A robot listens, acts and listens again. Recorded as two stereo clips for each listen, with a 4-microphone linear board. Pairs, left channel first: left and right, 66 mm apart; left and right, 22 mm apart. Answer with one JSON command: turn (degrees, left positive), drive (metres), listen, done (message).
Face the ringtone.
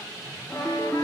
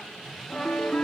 {"turn": 15}
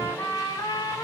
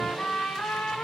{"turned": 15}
{"listen": true}
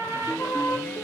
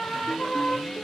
{"turn": 150}
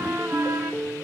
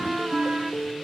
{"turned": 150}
{"turn": 25}
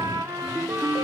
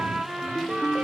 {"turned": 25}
{"done": "Found it: a ringtone, straight ahead."}